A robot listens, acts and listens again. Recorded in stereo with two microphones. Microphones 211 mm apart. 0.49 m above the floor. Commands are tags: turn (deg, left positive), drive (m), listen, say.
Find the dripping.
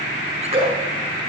<turn deg="-30"/>
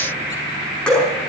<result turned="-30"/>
<say>Found it: dripping, straight ahead, over 4 m away.</say>